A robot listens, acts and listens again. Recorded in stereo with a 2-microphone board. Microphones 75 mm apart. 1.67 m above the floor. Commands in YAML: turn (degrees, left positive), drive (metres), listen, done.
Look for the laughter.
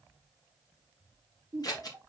turn: -40
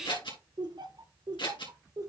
turn: -130
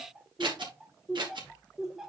done: "Found it: laughter, straight ahead."